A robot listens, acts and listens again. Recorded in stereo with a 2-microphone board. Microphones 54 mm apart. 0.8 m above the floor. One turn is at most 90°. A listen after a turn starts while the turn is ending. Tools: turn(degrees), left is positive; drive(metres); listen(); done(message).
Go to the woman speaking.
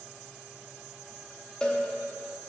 listen()
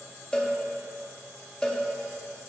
listen()
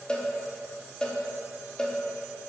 done("I can't make out a woman speaking to turn to.")